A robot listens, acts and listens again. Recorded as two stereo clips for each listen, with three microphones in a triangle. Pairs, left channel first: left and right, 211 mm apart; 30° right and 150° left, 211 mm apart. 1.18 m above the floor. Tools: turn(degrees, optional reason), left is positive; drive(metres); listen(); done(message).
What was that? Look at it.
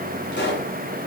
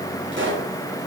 turn(degrees=125, reason="The pop: 125° left.")
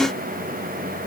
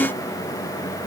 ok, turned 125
done("I heard a pop from this way, but can't make it out now.")